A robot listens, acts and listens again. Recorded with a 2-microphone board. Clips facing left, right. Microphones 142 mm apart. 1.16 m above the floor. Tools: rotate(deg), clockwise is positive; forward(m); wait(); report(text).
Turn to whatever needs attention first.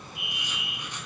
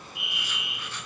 rotate(-50)
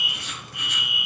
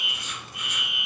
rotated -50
report("Found it: a fire alarm, straight ahead.")